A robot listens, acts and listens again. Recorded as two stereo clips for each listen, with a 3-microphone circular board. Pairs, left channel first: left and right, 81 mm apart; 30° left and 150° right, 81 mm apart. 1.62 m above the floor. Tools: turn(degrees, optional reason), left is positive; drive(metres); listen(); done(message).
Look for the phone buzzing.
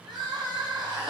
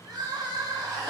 listen()
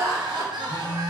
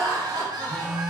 turn(degrees=125, reason="The phone buzzing: 125° left.")
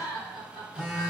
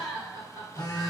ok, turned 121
done("Facing the phone buzzing.")